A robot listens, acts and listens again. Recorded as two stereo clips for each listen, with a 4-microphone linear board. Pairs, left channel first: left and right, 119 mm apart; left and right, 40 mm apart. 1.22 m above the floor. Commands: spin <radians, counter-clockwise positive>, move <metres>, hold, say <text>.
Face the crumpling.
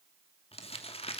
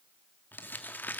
spin 0.96
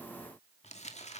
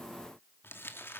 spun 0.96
spin 1.22
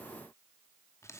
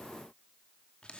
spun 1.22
spin 0.44
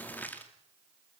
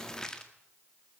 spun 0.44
spin 0.26
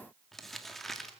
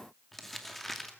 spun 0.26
say Found it: crumpling, straight ahead.